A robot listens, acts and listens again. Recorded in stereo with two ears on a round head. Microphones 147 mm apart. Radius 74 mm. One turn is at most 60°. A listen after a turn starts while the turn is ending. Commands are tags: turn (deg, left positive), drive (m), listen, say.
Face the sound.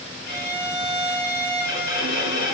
<turn deg="55"/>
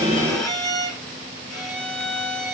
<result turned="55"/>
<say>Found it: a violin, straight ahead.</say>